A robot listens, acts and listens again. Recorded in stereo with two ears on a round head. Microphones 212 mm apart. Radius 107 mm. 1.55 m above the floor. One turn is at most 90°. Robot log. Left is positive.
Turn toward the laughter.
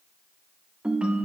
cmd idle
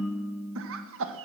note: The laughter: about 60° right or 120° right.
cmd yaw -60
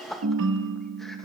end: Found it: laughter, straight ahead, 1 to 2 m away.